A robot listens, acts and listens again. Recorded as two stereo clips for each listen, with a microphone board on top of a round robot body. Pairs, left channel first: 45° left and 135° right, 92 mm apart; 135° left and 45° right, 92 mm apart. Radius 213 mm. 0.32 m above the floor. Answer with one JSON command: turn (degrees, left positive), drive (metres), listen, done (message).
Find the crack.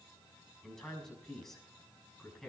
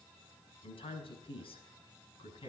{"listen": true}
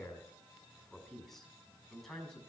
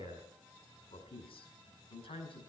{"listen": true}
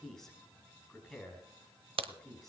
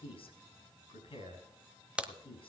{"turn": -125}
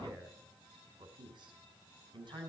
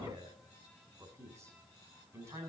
{"done": "I heard a crack from this way, but can't make it out now."}